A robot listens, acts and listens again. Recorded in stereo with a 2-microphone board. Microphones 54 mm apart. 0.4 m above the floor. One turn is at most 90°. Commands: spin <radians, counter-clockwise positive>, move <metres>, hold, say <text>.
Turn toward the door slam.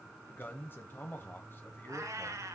hold
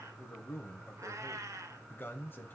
hold
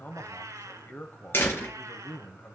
spin 0.70
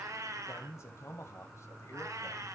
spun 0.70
hold
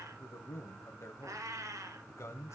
say I heard a door slam, but can't make it out now. It was about straight ahead or 100° left.